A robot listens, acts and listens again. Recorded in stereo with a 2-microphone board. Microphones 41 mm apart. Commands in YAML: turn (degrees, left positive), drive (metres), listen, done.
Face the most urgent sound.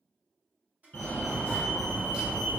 turn: 50
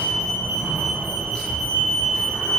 turn: 15
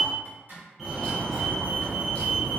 done: "Facing the fire alarm, under 1 m away."